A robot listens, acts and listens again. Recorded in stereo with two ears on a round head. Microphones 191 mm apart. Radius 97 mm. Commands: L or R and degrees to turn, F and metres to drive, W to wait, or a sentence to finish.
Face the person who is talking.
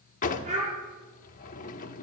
R35
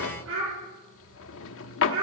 R110
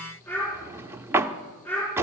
L10
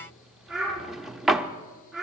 Facing the child speaking, over 4 m away.